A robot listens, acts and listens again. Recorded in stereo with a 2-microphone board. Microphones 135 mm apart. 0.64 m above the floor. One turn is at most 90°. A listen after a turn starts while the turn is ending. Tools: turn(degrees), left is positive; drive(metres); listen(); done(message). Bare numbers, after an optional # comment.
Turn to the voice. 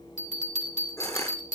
listen()
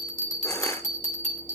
listen()
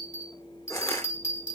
done("I can't make out anyone speaking, only a bell and crushing.")